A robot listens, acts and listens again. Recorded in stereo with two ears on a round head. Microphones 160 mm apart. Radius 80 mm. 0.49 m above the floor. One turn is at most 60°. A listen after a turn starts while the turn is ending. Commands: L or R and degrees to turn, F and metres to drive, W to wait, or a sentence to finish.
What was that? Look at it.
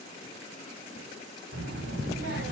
R60
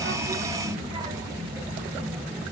Facing the child speaking.